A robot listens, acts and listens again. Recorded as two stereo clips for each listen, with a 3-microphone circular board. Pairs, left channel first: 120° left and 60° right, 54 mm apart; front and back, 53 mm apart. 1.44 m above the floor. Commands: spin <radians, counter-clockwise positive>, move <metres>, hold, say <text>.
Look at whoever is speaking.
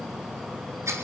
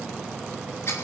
hold
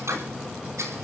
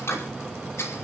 hold
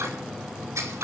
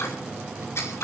say I can't make out anyone speaking to turn to.